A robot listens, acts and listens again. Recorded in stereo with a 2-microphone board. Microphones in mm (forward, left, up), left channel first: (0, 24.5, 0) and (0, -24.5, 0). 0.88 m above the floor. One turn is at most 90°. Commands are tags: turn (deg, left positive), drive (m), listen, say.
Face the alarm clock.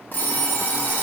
<turn deg="40"/>
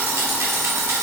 <turn deg="90"/>
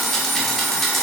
<say>Facing the alarm clock, under 1 m away.</say>